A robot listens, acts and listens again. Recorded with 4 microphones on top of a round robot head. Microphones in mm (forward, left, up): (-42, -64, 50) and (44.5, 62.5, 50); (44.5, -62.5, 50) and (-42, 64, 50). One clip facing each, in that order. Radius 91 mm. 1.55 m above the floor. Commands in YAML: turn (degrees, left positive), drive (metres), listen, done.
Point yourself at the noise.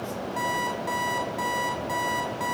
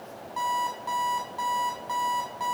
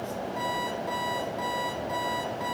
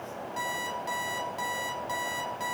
turn: 160
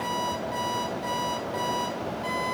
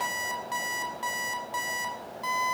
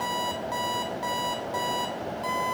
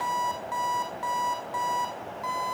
turn: 10
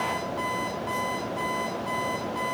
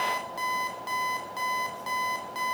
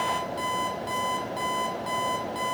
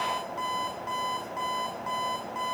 done: "Found it: an alarm clock, straight ahead, over 4 m away."